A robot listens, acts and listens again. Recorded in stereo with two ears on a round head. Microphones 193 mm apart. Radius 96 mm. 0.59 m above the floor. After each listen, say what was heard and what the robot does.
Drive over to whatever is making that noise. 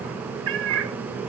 The cat meowing: about 65° right or 115° right. Turn 65° right.
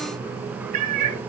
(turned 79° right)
So it is at 35° right. Turn 35° right.
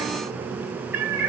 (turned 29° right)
The cat meowing is now 10° right. Turn 10° right.
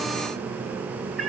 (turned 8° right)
Drive 1.0 m forward.
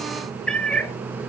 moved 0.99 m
Drive 1.0 m forward.
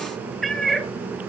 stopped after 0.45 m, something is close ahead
Arrived at the cat meowing, straight ahead.